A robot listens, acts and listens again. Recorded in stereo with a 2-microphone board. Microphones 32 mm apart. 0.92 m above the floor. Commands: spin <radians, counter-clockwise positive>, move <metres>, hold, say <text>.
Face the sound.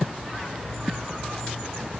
hold
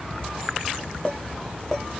spin 0.44
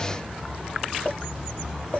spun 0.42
spin 2.18
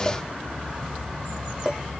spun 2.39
spin -0.26
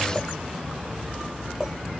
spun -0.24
hold
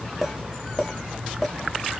say Facing the clink, 1 to 2 m away.